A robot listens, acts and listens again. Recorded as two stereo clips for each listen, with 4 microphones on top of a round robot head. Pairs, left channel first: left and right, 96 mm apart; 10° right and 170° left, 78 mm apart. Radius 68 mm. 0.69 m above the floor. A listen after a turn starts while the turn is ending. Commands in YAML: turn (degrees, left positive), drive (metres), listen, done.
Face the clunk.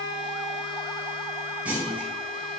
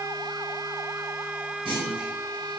turn: -165
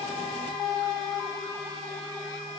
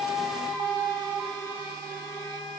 done: "I heard a clunk from this way, but can't make it out now."